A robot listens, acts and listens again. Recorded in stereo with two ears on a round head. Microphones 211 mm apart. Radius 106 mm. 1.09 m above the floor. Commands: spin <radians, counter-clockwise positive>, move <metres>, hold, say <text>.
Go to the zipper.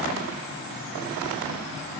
hold
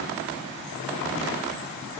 hold
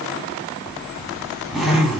spin -0.52
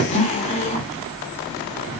spin 0.44
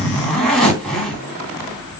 move 1.0
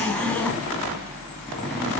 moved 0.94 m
move 1.0
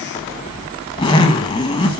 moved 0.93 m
spin 0.35
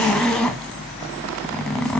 move 1.0
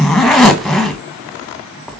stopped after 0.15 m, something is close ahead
say Arrived at the zipper, straight ahead.